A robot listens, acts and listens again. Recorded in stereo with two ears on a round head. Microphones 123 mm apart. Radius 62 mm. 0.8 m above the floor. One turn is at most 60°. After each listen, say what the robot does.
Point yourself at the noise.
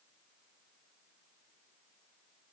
Keep listening.
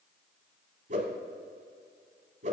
Turn 55° right.
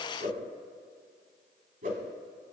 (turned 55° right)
Turn 60° right.
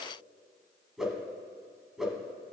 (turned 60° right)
Found it: a whoosh, straight ahead.